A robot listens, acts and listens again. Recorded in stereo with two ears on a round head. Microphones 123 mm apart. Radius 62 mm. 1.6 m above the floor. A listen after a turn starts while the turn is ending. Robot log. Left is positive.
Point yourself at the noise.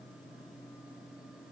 cmd idle
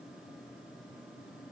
cmd idle
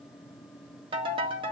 note: The ringtone: about 35° right or 145° right.
cmd yaw -35
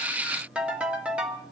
note: So it is at 10° right.
cmd yaw -10
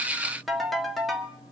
end: Found it: a ringtone, straight ahead.